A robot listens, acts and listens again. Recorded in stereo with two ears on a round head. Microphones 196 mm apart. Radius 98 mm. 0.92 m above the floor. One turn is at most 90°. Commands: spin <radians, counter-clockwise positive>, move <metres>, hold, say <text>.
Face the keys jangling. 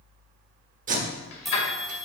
spin 1.13
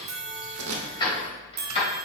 spin 0.44
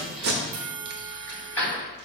spin 0.17
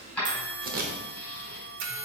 say Found it: keys jangling, straight ahead.